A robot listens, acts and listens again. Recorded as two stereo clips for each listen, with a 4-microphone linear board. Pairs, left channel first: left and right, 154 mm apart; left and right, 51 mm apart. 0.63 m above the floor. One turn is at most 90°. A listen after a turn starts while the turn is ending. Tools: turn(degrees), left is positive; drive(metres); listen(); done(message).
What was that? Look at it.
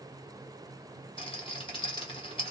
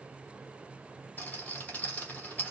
turn(degrees=35)
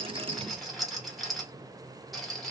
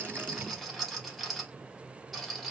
done("Found it: a rattle, straight ahead, 1 to 2 m away.")